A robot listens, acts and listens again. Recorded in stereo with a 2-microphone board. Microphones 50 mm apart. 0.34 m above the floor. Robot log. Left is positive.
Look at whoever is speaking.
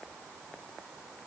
cmd idle
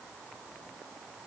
cmd idle
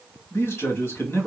note: The man speaking: about 55° left or 125° left.
cmd yaw +55
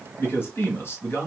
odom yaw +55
note: So it is at 55° left.
cmd yaw +55
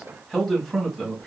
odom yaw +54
end: Facing the man speaking, 1 to 2 m away.